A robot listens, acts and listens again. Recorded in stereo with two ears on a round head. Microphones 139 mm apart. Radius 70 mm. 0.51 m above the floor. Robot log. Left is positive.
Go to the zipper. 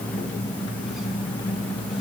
cmd idle
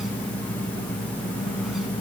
cmd idle
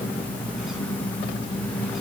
end: I can't make out a zipper to turn to.